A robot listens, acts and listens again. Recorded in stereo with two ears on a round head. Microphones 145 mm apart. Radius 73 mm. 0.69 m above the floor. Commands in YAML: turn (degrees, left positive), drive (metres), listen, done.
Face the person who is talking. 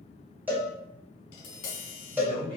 turn: -35
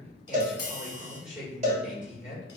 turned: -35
done: "Found it: a man speaking, straight ahead."